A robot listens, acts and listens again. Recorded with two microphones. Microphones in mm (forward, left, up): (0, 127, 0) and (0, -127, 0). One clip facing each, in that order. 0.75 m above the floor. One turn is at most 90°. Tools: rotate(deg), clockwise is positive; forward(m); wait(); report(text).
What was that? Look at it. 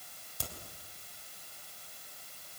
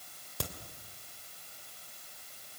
rotate(70)
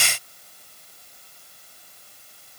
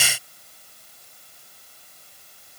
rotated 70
wait()
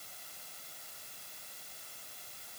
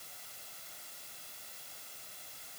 report("I heard a crack, but can't make it out now. It was about straight ahead or 40° right.")